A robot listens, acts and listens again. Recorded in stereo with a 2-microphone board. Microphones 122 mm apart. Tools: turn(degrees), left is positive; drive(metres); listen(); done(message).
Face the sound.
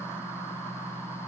listen()
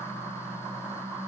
listen()
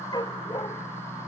turn(degrees=35)
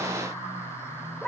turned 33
done("Facing the dog barking.")